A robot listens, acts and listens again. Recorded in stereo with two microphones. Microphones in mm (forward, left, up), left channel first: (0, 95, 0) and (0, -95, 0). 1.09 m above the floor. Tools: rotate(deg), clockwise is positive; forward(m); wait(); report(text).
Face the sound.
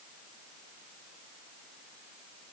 wait()
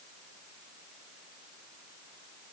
wait()
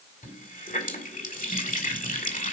rotate(-45)
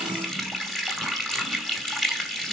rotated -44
report("Found it: a running tap, straight ahead.")